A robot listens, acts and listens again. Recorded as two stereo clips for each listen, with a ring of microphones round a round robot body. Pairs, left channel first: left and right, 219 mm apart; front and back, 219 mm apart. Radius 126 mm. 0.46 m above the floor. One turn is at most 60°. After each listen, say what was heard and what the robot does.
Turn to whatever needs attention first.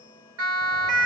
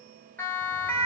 The siren: 85° right. Turn 60° right.
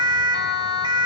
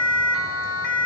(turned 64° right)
The siren is now 20° right. Turn 20° right.
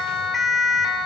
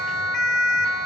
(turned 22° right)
Facing the siren.